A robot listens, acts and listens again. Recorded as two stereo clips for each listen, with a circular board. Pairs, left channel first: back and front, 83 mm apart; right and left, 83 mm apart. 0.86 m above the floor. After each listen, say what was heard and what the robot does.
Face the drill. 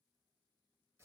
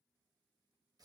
Keep listening.
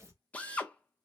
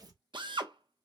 The drill: 105° left. Turn 105° left.
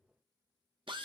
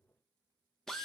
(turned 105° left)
Facing the drill.